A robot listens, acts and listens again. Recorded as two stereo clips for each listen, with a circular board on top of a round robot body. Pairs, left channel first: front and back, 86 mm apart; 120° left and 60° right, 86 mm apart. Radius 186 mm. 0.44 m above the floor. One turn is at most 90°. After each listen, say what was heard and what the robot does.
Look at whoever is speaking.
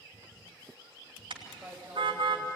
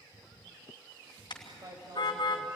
The man speaking: 105° right. Turn 90° right.
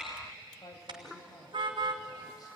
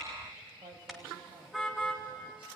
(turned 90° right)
The man speaking is now 45° right. Turn 45° right.
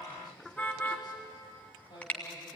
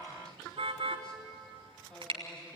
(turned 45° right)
The man speaking is now 40° left. Turn 40° left.
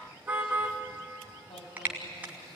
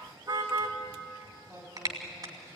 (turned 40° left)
Found it: a man speaking, straight ahead.